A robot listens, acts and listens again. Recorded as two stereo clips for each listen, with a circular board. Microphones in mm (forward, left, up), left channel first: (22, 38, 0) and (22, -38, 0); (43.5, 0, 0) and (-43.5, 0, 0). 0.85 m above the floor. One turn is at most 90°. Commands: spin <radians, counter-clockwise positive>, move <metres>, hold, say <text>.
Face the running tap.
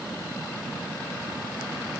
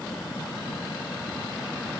hold
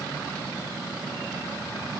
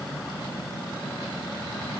hold
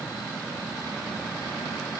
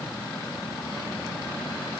say I can't make out a running tap to turn to.